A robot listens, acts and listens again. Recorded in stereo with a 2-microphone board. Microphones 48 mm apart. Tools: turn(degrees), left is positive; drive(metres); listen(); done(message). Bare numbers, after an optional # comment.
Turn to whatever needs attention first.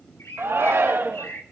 # The shout: about 60° right or 120° right.
turn(-60)
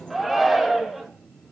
done("Found it: a shout, straight ahead.")